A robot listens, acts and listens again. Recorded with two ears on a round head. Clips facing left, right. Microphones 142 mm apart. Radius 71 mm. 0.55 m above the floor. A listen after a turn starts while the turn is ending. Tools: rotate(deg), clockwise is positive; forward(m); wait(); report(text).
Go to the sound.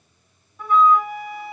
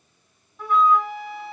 rotate(-30)
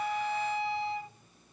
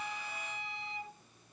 rotate(-150)
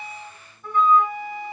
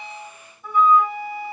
rotate(10)
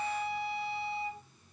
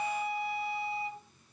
forward(1.0)
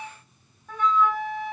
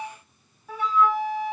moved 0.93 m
forward(1.0)
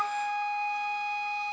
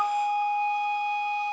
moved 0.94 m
rotate(10)
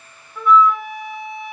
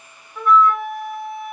forward(1.0)
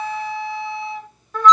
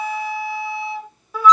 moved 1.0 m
rotate(10)
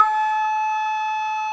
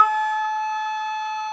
forward(1.0)
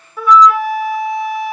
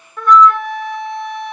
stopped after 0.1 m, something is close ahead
report("Arrived at the flute, straight ahead.")